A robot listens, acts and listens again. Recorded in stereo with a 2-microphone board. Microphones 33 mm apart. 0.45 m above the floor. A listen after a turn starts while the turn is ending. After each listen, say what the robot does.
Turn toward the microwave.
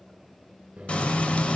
Turn 50° right.
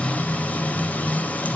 Keep listening.
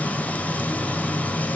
Keep listening.
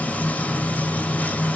I heard a microwave, but can't make it out now. It was about straight ahead or 80° right.